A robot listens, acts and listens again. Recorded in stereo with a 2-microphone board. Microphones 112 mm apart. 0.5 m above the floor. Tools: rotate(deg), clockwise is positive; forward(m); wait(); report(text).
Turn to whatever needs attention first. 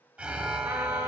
rotate(30)
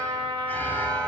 rotate(-20)
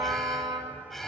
report("Facing the alarm, under 1 m away.")